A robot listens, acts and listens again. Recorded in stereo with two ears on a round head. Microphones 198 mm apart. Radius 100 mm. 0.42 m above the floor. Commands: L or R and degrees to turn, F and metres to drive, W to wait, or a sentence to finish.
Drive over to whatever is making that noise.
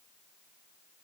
W
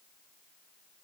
W
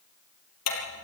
L90
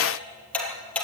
F1.0
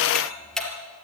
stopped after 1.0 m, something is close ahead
Something is in my way. I am facing the ticking but have not reached it.